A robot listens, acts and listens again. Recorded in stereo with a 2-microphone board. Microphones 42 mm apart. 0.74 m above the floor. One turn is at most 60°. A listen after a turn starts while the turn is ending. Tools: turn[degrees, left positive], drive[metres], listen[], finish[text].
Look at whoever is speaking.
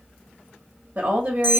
Thought: The woman speaking: about 40° right or 140° right.
Action: turn[-40]
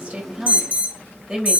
Action: finish[Found it: a woman speaking, straight ahead, 1 to 2 m away.]